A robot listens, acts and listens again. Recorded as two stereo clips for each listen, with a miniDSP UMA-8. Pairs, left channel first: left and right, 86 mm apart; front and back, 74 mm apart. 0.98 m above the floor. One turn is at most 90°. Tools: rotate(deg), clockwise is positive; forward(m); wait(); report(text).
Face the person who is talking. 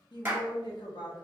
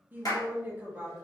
rotate(-90)
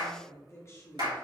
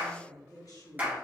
rotate(-35)
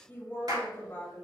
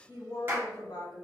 rotate(-25)
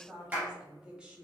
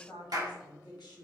rotate(15)
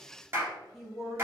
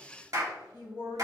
report("Facing the woman speaking.")